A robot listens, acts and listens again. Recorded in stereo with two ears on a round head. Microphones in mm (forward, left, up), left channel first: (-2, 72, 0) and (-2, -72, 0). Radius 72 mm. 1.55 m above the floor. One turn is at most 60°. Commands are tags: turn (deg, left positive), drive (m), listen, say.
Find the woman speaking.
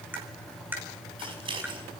<listen/>
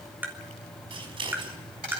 <listen/>
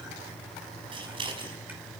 <say>I can't make out a woman speaking to turn to.</say>